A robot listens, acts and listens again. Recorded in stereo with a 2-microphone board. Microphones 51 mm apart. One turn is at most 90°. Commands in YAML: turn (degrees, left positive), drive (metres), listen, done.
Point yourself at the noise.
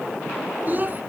turn: -40
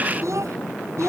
turn: -90
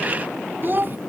turn: -40
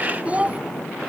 turn: -25
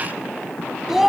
done: "Facing the child speaking."